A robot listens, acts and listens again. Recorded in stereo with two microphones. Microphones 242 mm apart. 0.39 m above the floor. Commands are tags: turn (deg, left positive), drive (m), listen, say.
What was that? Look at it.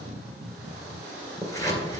<turn deg="30"/>
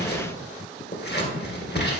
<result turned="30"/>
<turn deg="135"/>
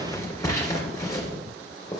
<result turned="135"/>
<turn deg="15"/>
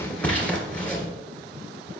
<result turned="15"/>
<say>Facing the scissors, 2 to 4 m away.</say>